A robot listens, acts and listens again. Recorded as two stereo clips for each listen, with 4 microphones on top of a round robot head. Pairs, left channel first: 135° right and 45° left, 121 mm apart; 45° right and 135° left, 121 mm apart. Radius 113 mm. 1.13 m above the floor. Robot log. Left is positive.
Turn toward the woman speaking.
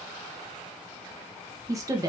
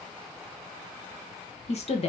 note: The woman speaking: 15° right.
cmd yaw -15
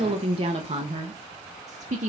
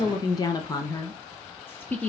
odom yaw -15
note: The woman speaking is now 30° left.
cmd yaw +30
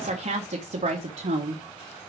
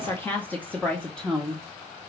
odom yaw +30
note: The woman speaking is now 40° left.
cmd yaw +40
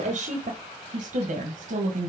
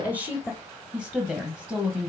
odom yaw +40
note: The woman speaking is now 30° left.
cmd yaw +30
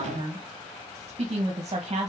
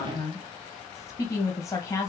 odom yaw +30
end: Found it: a woman speaking, straight ahead, 1 to 2 m away.